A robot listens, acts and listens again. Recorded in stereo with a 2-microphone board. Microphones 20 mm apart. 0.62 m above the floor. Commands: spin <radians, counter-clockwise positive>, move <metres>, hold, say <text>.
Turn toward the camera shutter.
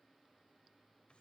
hold
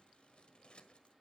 hold
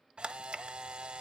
spin -0.96
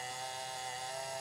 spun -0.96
say Found it: a camera shutter, straight ahead, under 1 m away.